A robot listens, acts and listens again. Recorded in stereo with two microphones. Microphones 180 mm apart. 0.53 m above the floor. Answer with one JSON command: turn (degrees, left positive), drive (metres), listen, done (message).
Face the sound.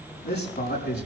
{"turn": 70}
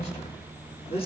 {"turn": 35}
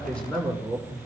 {"done": "Found it: a man speaking, straight ahead, over 4 m away."}